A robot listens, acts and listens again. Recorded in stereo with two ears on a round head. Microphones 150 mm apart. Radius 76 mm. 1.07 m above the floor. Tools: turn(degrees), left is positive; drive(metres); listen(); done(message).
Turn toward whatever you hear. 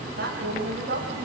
turn(degrees=-60)
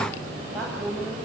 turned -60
done("Facing the woman speaking.")